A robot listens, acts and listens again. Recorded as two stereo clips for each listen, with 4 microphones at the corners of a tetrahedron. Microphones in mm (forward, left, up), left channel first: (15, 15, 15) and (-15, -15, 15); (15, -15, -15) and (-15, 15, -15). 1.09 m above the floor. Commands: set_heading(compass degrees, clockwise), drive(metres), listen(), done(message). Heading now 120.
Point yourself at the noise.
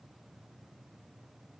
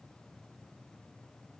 listen()
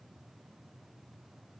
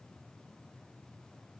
listen()
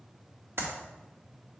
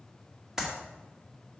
set_heading(265)
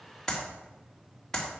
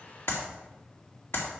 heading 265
set_heading(295)
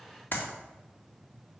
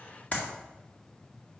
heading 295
done("Facing the clap, 1 to 2 m away.")